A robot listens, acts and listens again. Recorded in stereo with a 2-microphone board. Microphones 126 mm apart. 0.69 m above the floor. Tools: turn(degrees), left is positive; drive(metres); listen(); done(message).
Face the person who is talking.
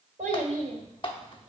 turn(degrees=-90)
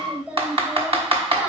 turn(degrees=-10)
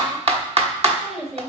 done("Facing the child speaking.")